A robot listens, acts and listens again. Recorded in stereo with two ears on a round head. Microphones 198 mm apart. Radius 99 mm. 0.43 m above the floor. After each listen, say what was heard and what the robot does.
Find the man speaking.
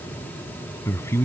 Turn 30° left.
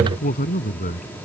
So it is at 140° left. Turn 140° left.
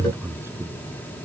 The man speaking is now 10° right. Turn 10° right.
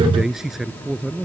Found it: a man speaking, straight ahead.